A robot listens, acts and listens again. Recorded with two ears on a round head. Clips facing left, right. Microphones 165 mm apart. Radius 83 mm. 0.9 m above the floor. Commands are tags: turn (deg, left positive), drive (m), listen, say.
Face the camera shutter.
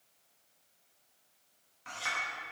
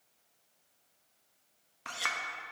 <listen/>
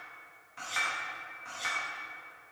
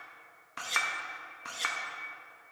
<listen/>
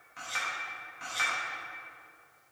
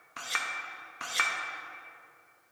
<say>I can't make out a camera shutter, only a clink.</say>